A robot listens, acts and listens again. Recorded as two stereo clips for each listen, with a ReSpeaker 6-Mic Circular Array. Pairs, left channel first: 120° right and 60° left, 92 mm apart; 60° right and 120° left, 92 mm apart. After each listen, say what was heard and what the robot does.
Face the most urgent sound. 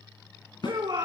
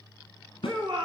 The shout: 90° left. Turn 90° left.
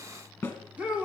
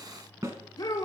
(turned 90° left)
The shout is now 15° right. Turn 15° right.
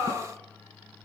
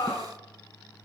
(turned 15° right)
Found it: a shout, straight ahead, over 4 m away.